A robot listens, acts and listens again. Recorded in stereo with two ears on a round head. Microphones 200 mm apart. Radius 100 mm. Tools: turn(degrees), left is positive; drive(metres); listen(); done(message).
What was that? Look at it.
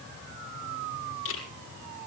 turn(degrees=65)
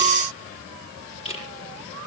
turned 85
turn(degrees=30)
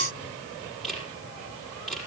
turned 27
done("Facing the camera shutter, over 4 m away.")